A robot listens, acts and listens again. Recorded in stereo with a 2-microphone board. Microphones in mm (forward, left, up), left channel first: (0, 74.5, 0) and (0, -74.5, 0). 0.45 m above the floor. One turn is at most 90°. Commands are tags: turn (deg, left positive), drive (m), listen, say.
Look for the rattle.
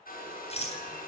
<turn deg="45"/>
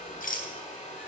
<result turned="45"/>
<turn deg="90"/>
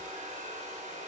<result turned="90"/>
<listen/>
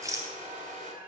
<turn deg="-25"/>
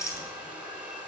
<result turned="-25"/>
<turn deg="25"/>
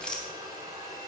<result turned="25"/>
<say>Facing the rattle, 2 to 4 m away.</say>